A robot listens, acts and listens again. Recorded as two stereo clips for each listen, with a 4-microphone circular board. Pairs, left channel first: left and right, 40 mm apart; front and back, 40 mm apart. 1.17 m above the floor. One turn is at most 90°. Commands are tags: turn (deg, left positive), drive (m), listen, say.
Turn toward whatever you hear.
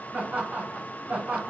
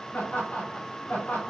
<turn deg="-60"/>
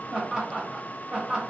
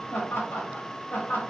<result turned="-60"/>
<turn deg="-35"/>
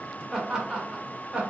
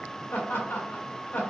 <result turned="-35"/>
<turn deg="-25"/>
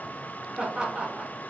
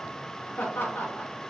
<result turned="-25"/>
<turn deg="-25"/>
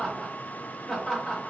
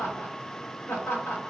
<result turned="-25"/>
<turn deg="10"/>
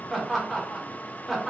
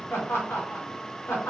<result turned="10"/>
<say>Found it: laughter, straight ahead.</say>